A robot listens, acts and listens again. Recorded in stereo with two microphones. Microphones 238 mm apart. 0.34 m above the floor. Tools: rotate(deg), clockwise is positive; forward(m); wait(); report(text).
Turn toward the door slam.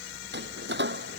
rotate(50)
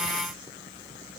wait()
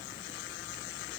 report("I heard a door slam, but can't make it out now. It was about straight ahead or 80° right.")